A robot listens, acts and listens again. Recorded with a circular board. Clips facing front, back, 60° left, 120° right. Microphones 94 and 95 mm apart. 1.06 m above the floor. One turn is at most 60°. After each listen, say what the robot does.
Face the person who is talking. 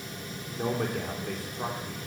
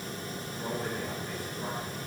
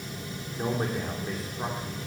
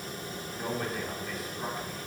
Found it: a man speaking, straight ahead.